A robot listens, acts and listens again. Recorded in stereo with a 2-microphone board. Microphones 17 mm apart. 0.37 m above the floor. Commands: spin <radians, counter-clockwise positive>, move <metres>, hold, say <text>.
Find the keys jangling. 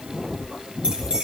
spin -1.22
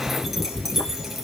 spin -0.17
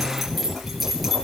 say Found it: keys jangling, straight ahead.